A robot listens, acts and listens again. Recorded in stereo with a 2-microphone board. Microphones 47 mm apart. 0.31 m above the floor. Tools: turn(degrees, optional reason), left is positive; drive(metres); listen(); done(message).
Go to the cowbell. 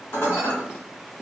listen()
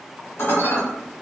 listen()
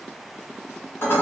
done("I can't make out a cowbell, only dishes clattering.")